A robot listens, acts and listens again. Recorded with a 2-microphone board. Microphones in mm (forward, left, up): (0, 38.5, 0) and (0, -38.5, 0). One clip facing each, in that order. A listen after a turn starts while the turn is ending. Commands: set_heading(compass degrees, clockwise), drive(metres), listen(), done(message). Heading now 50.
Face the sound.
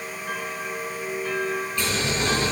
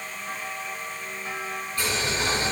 set_heading(90)
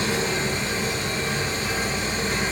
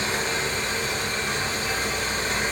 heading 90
set_heading(190)
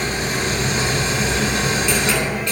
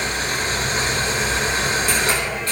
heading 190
set_heading(230)
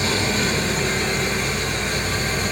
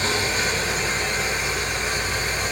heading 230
done("Found it: boiling, straight ahead, 2 to 4 m away.")